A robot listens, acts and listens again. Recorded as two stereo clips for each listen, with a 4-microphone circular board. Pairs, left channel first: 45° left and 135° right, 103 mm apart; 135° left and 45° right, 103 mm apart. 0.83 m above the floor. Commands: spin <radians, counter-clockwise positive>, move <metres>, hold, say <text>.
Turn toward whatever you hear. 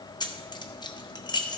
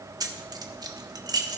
say Found it: keys jangling, straight ahead.